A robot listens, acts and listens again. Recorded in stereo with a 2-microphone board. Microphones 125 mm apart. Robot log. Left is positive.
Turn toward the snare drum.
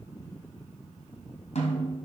note: The snare drum: about 60° left or 120° left.
cmd yaw +60
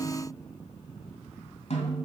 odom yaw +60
note: So it is at 60° left.
cmd yaw +60
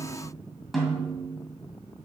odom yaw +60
end: Found it: a snare drum, straight ahead, 2 to 4 m away.